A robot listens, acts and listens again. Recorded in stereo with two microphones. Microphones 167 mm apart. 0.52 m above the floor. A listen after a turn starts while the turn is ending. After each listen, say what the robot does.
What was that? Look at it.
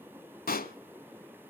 Turn 65° left.
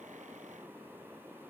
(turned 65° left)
Keep listening.
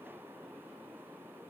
I heard a pop, but can't make it out now. It was about straight ahead or 50° left.